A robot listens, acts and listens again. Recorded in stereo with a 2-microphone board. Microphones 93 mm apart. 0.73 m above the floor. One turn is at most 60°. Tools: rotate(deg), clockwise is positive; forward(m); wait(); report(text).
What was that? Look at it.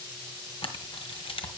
rotate(-60)
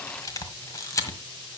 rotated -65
rotate(-35)
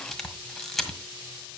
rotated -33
report("Found it: a camera shutter, straight ahead.")